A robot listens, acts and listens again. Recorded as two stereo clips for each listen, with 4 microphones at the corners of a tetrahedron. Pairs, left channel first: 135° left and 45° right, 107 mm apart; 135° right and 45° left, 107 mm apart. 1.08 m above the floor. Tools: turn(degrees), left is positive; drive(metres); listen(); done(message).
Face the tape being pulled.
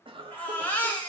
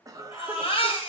listen()
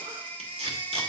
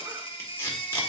turn(degrees=-70)
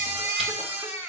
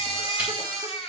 listen()
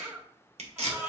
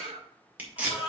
turn(degrees=-30)
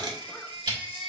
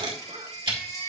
done("Facing the tape being pulled, 2 to 4 m away.")